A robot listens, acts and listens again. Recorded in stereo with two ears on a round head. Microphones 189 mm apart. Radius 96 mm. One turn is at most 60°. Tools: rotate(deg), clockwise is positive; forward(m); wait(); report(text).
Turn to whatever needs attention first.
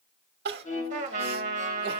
rotate(50)
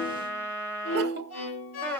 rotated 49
wait()
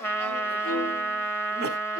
wait()
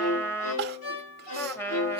rotate(60)
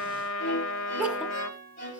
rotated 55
rotate(10)
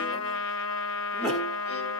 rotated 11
wait()
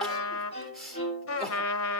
report("Facing the crying, 1 to 2 m away.")